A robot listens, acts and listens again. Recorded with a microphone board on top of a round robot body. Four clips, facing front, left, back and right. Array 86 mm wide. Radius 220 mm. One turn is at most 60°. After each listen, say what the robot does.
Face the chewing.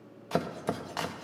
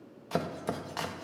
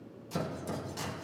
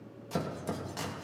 Keep listening.
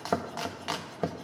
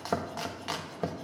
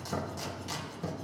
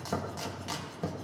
Keep listening.
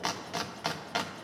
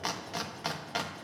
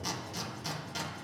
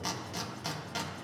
I can't make out chewing to turn to.